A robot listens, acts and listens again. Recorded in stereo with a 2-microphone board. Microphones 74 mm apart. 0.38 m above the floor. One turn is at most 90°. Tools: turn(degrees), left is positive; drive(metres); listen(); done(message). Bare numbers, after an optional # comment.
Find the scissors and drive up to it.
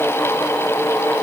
listen()
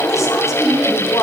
listen()
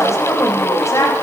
done("I can't make out scissors to turn to.")